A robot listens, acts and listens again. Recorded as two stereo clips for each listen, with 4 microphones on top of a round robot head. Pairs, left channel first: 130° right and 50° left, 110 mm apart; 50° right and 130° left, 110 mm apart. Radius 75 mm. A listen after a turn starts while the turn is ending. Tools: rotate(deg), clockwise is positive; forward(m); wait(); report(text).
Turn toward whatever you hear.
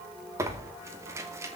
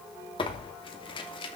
rotate(10)
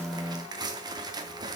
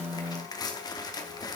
report("Facing the tearing paper.")